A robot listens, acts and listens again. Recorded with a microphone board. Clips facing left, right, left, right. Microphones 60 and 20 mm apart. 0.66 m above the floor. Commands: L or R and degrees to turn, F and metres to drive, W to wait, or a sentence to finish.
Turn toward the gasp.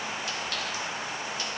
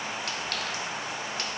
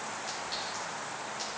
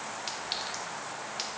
W
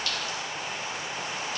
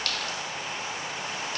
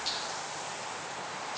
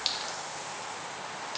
W
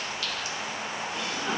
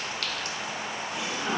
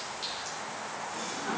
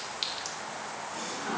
R30
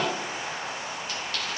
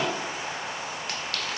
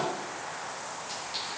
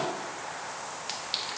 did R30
W
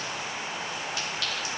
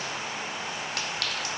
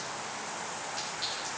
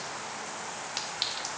I heard a gasp, but can't make it out now. It was about 15° left or 135° right.